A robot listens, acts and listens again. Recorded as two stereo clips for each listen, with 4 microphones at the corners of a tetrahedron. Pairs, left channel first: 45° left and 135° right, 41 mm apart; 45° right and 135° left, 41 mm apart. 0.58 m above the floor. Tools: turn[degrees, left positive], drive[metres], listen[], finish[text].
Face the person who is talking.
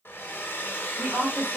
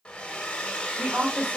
Thought: The woman speaking: 175° left.
Action: turn[175]
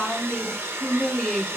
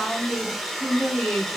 Thought: The woman speaking is now 25° right.
Action: turn[-25]
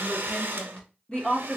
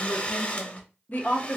Thought: The woman speaking is now 20° right.
Action: turn[-20]
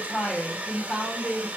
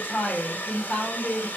Thought: The woman speaking is now 10° right.
Action: turn[-10]
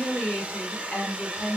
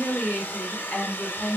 Action: finish[Found it: a woman speaking, straight ahead, 1 to 2 m away.]